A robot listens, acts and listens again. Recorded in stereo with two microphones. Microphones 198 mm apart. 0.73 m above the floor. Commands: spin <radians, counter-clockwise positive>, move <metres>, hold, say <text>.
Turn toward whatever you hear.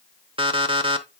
spin -0.44
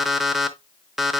say Found it: an alarm clock, straight ahead.